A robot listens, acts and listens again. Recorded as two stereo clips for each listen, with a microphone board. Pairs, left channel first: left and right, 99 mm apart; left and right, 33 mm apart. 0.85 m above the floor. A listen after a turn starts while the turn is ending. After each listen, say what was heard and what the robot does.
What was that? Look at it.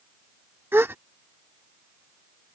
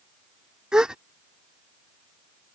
The gasp: about 20° right or 160° right. Turn 20° right.
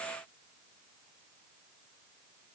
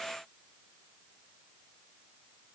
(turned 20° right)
Keep listening.
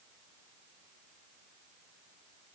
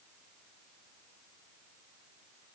I heard a gasp, but can't make it out now. It was about straight ahead or 140° right.